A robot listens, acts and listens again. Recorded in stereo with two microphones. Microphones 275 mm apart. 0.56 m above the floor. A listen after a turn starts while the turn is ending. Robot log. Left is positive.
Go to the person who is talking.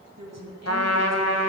note: The woman speaking: about 75° right or 105° right.
cmd yaw -75
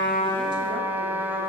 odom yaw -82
cmd idle
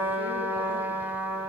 cmd idle
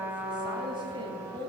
note: So it is at 20° right.
cmd yaw -20
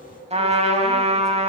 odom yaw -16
cmd idle
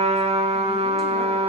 cmd idle
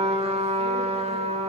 end: I heard a woman speaking from this way, but can't make it out now. I did not reach it.